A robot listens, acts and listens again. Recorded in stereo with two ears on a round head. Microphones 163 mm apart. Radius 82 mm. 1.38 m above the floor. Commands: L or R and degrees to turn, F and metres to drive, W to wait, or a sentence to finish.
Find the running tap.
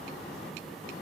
W
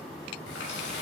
L70
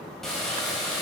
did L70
Found it: a running tap, straight ahead, over 4 m away.